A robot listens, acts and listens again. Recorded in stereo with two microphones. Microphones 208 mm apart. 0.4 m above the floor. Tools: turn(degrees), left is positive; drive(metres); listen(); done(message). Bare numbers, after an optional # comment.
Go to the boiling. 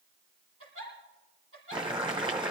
# The boiling: about 25° right or 155° right.
turn(-25)
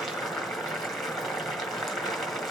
drive(1.0)
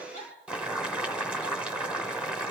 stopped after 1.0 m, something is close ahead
done("Arrived at the boiling, straight ahead.")